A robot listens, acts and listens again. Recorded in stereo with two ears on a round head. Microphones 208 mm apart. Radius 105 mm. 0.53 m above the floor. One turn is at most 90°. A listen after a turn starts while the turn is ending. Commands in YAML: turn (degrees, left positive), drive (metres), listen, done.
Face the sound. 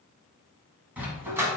turn: -30
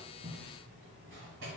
listen: true
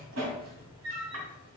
turn: -90
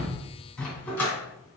turn: 10
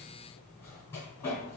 turn: 10
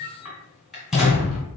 done: "Found it: a dog barking, straight ahead, 1 to 2 m away."